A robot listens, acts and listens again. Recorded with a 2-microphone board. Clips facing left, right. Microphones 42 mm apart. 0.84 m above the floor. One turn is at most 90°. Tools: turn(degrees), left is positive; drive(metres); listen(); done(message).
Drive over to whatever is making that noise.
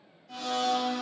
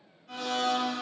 turn(degrees=-90)
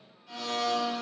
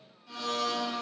drive(metres=1.0)
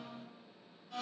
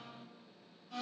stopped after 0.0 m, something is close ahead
turn(degrees=-10)
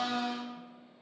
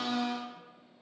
done("Blocked. The blender is further on, straight ahead.")